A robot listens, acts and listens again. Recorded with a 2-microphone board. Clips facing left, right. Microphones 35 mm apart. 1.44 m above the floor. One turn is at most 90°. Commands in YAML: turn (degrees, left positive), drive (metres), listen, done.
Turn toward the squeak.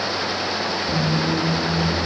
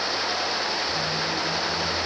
turn: 55
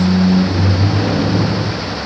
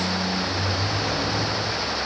turn: 50
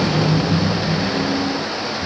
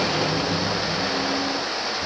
done: "Found it: a squeak, straight ahead."